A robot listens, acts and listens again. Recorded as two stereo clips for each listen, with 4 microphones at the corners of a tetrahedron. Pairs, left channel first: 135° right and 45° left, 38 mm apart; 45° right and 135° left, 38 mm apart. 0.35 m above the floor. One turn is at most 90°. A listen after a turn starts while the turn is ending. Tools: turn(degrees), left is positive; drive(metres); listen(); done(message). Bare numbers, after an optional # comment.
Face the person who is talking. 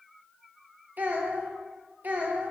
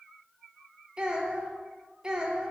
# The child speaking: 70° left.
turn(70)
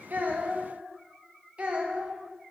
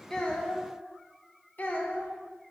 # The child speaking is now 10° right.
turn(-10)
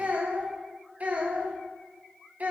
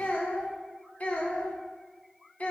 done("Facing the child speaking.")